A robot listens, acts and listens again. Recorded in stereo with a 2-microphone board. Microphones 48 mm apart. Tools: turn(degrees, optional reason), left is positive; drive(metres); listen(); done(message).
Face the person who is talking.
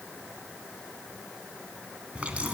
listen()
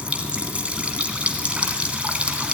listen()
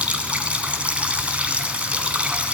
done("I can't make out anyone speaking, only a running tap.")